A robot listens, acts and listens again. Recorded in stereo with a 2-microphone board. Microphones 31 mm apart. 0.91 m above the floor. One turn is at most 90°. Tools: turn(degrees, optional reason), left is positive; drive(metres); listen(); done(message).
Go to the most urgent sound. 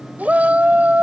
turn(degrees=-60, reason="The shout: about 60° right or 120° right.")
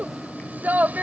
turn(degrees=-65, reason="So it is at 65° right.")
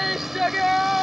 drive(metres=1.0)
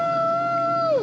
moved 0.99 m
drive(metres=1.0)
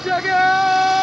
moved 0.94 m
turn(degrees=-10, reason="The shout is now 10° right.")
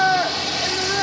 drive(metres=1.0)
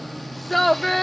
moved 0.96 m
drive(metres=1.0)
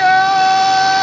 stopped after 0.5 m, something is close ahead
turn(degrees=15, reason="The shout is now 15° left.")
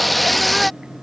done("I am next to the shout.")